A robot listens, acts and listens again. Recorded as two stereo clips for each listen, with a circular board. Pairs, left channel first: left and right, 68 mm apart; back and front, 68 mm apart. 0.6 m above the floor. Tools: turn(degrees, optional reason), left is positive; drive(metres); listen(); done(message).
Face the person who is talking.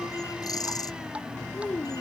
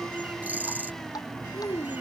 turn(degrees=165, reason="The child speaking: 165° left.")
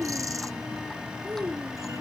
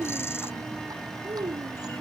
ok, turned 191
turn(degrees=-30, reason="The child speaking is now 30° right.")
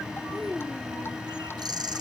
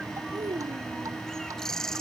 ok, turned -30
done("Facing the child speaking.")